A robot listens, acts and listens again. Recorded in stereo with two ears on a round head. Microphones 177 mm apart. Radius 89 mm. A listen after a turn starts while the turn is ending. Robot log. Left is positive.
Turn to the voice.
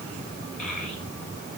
note: The child speaking: about 45° left or 135° left.
cmd yaw +45
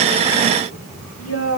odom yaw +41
note: So it is at 95° left.
cmd yaw +95
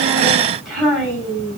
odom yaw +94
end: Facing the child speaking, over 4 m away.